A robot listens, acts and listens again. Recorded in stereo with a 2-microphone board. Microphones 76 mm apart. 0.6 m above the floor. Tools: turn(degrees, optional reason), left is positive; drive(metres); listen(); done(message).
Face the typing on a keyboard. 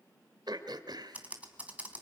turn(degrees=-20, reason="The typing on a keyboard: about 20° right or 160° right.")
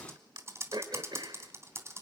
turn(degrees=-140, reason="So it is at 140° right.")
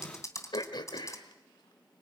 turn(degrees=45, reason="The typing on a keyboard is now 45° left.")
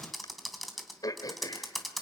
done("Found it: typing on a keyboard, straight ahead.")